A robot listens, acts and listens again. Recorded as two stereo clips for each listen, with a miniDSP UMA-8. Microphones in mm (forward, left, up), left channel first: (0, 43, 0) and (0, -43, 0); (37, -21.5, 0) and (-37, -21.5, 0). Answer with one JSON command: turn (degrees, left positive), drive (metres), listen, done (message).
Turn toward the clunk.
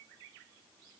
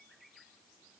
{"listen": true}
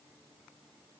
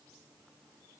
{"listen": true}
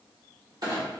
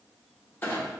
{"turn": -60}
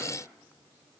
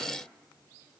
{"done": "Facing where the clunk came from. I can't hear it now."}